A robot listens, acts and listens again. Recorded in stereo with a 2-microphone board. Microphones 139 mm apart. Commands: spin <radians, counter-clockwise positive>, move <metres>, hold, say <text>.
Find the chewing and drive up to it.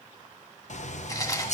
spin 0.44
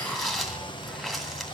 move 1.0
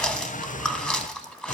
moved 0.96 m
move 1.0
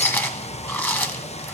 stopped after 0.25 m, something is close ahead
spin 0.26
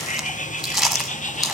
say I am next to the chewing.